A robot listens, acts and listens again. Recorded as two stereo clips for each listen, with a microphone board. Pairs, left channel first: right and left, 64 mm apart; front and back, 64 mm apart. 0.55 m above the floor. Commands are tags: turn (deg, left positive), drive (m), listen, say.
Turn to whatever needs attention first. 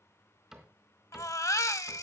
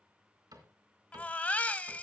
<turn deg="-65"/>
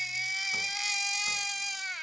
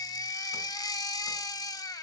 <say>Facing the baby crying, under 1 m away.</say>